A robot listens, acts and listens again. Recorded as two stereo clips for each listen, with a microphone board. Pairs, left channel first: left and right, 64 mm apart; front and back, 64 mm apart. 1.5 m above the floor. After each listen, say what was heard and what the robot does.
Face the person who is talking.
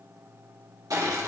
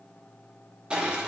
Keep listening.
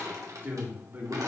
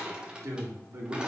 The man speaking: 145° right. Turn 145° right.
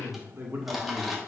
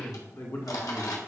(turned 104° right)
The man speaking is now 40° right. Turn 40° right.
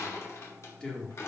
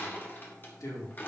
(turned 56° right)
The man speaking is now 15° left. Turn 15° left.
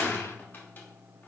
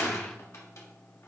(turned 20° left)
Keep listening.
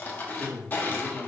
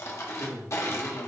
Found it: a man speaking, straight ahead, 1 to 2 m away.